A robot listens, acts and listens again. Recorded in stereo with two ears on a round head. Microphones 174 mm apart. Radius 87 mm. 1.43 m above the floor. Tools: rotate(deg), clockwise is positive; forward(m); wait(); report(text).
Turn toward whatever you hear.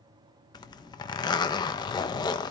rotate(-20)
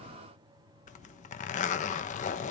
rotate(-135)
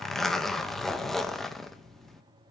report("Found it: a zipper, straight ahead, 1 to 2 m away.")